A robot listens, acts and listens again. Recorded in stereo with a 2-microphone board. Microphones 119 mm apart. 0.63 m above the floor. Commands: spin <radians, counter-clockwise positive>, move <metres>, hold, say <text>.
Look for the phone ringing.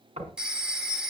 spin -0.52
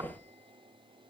hold
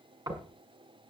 hold
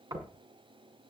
say I heard a phone ringing, but can't make it out now. It was about 25° left or 145° right.